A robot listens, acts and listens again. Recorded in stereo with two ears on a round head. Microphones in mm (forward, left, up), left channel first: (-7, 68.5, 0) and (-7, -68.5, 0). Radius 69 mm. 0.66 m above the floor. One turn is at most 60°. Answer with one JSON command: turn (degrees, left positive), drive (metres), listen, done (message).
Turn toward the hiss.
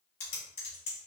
{"listen": true}
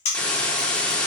{"turn": 30}
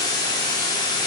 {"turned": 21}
{"turn": 60}
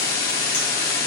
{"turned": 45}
{"turn": 60}
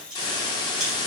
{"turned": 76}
{"turn": 30}
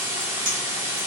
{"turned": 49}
{"turn": -15}
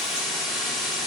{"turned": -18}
{"done": "Found it: a hiss, straight ahead, under 1 m away."}